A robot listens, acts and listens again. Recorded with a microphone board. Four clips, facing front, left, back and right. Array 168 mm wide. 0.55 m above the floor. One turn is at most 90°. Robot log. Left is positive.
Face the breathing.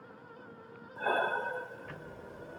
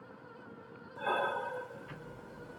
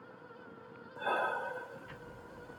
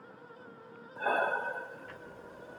note: The breathing: 50° right.
cmd yaw -50
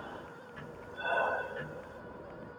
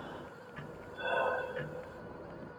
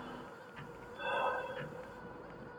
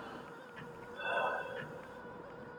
note: The breathing is now 20° left.
cmd yaw +20
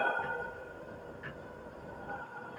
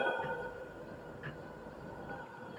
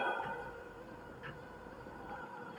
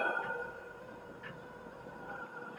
end: Facing the breathing.